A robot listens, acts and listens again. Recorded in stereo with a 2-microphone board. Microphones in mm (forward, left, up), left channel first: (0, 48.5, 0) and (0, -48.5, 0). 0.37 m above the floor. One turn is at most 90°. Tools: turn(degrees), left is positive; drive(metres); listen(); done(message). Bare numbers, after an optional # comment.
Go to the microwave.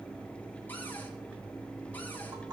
listen()
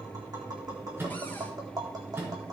# The microwave: about 25° right or 155° right.
turn(-25)
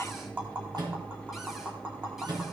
# So it is at 130° right.
turn(-90)
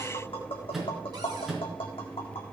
drive(1.0)
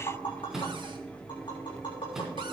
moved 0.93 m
drive(1.0)
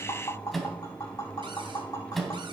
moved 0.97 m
drive(1.0)
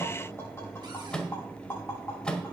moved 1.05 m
# The microwave is now 10° left.
turn(10)
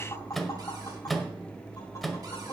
drive(1.0)
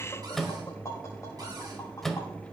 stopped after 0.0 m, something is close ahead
done("I am next to the microwave.")